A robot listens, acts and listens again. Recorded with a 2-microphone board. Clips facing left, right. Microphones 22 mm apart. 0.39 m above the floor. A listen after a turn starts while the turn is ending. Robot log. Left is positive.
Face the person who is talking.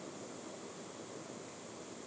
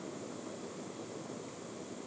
cmd idle
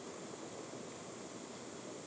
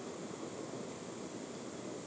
cmd idle
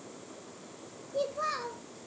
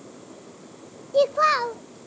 note: The child speaking: about 60° right or 120° right.
cmd yaw -60
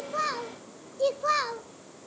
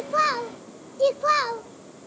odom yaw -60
note: So it is at 20° right.
cmd yaw -20
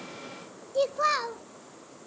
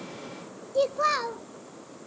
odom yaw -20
end: Facing the child speaking.